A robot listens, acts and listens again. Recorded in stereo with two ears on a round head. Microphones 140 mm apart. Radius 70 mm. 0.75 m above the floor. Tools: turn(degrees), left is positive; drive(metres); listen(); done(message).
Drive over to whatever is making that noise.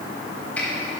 turn(degrees=30)
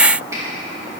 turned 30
listen()
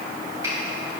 listen()
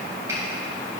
done("I heard a finger snap, but can't make it out now. It was about 20° right or 140° left. I did not reach it.")